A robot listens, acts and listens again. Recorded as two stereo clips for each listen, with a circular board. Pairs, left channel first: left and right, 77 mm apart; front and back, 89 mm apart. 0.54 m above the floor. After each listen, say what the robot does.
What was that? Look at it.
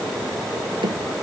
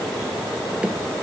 Turn 100° right.
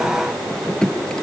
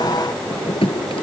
Turn 10° left.
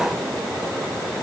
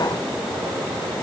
Keep listening.
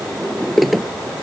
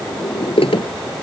Found it: a drawer, straight ahead.